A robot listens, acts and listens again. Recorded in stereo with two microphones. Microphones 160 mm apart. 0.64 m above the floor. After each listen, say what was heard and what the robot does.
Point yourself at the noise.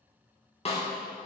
The snare drum: about 40° left or 140° left. Turn 40° left.
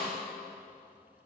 So it is at 105° left. Turn 105° left.
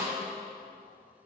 Facing the snare drum.